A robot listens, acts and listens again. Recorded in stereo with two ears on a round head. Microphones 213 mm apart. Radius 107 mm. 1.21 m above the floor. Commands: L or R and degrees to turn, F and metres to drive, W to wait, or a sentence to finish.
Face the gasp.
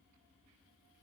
W
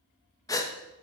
L15
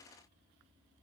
W
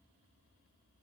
I heard a gasp, but can't make it out now. It was about straight ahead or 150° left.